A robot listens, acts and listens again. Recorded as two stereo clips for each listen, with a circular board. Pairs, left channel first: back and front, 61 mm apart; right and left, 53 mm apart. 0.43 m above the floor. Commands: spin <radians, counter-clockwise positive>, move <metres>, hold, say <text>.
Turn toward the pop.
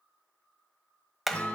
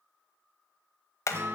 hold
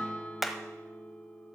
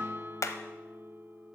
hold
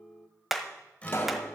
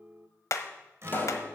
spin -2.36
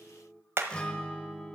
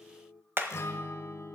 say I heard a pop from this way, but can't make it out now.